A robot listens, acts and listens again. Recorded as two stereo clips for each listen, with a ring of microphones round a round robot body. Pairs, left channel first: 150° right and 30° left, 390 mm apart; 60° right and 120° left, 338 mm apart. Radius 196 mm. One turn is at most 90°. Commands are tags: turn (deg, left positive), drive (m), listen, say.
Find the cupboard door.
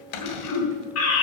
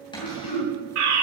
<turn deg="-90"/>
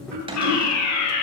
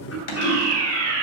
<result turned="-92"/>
<turn deg="-45"/>
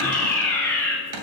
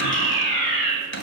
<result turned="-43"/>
<say>Found it: a cupboard door, straight ahead.</say>